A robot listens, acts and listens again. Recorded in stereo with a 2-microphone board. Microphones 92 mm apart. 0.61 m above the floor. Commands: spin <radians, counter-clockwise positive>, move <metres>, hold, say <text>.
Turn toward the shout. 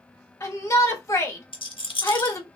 spin 0.61
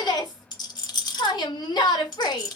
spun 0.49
spin 2.01
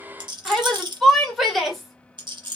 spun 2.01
say Facing the shout, 1 to 2 m away.